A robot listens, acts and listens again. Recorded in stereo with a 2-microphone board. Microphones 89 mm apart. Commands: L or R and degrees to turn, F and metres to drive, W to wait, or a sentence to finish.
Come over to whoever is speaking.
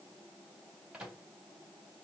W
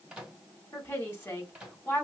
L25
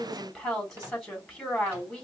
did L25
F1.0
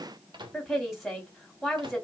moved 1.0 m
F1.0
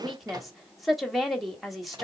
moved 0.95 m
F1.0
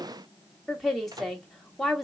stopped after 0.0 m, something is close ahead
Arrived at the woman speaking, straight ahead.